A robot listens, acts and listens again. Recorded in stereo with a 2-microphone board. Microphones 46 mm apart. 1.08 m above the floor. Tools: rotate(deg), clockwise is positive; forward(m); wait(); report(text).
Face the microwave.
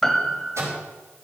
rotate(70)
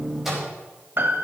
report("Found it: a microwave, straight ahead, over 4 m away.")